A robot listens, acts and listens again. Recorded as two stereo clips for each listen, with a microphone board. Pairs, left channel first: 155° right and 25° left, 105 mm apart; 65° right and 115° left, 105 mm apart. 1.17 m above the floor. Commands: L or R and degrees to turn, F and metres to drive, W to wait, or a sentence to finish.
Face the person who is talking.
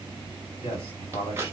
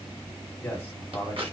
R140
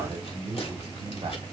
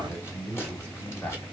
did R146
Facing the man speaking, 2 to 4 m away.